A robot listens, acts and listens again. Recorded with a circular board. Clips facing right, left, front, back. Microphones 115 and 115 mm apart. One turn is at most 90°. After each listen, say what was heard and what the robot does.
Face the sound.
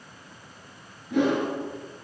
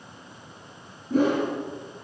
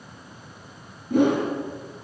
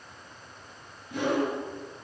The whoosh: 40° left. Turn 40° left.
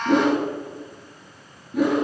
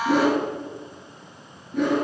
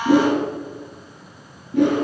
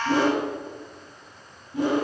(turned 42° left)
Found it: a whoosh, straight ahead, 2 to 4 m away.